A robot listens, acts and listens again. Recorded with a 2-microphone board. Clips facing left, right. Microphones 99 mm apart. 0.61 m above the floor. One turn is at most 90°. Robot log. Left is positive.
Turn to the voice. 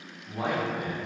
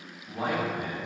cmd yaw +30
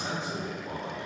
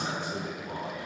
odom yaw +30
note: So it is at 155° left.
cmd yaw +90
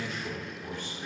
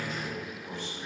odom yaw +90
note: The man speaking is now 65° left.
cmd yaw +65
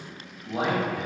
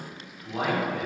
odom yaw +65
note: The man speaking is now 10° left.
cmd yaw +10
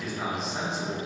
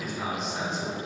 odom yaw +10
end: Found it: a man speaking, straight ahead, 1 to 2 m away.